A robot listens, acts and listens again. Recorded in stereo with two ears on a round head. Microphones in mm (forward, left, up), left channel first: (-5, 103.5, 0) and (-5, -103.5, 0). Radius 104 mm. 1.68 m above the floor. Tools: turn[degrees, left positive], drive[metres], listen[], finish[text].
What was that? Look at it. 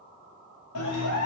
Action: turn[90]
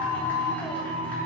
Thought: So it is at 10° left.
Action: turn[10]
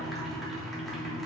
Action: finish[Found it: a clap, straight ahead, 2 to 4 m away.]